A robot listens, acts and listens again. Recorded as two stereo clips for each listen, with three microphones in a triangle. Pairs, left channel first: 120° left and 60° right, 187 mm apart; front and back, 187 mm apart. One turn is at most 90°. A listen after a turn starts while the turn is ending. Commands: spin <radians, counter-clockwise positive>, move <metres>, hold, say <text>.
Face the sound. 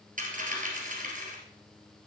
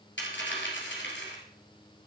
spin -0.26
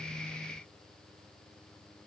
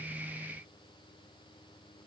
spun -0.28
say Facing where the dropped coin came from. I can't hear it now.